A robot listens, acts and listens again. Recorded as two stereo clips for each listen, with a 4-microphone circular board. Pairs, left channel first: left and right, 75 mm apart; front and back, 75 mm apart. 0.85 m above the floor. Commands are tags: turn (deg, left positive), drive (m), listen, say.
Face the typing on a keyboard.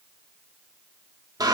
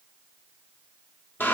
<listen/>
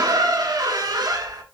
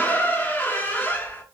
<listen/>
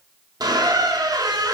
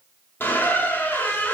<say>I can't make out typing on a keyboard to turn to.</say>